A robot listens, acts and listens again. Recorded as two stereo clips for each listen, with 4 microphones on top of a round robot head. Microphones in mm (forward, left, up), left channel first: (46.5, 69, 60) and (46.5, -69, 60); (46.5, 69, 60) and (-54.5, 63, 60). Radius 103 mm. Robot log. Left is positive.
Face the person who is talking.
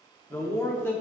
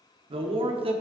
note: The man speaking: 165° left.
cmd yaw +165
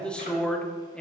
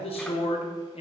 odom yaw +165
note: The man speaking is now 10° left.
cmd yaw +10
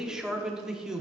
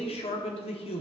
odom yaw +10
end: Facing the man speaking.